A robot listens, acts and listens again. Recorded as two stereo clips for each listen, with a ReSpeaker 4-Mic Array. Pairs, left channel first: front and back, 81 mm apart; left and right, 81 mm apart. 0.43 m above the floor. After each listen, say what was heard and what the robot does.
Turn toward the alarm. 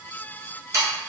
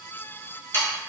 Keep listening.
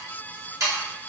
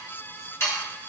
Keep listening.
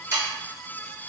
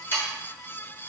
I can't make out an alarm, only sawing.